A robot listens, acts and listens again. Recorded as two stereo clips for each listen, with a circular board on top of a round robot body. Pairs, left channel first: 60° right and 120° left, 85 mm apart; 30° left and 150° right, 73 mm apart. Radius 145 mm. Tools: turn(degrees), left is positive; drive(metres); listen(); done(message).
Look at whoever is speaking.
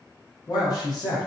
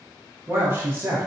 turn(degrees=-95)
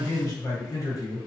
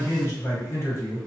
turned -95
turn(degrees=-15)
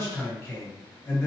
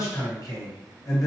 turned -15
done("Found it: a man speaking, straight ahead.")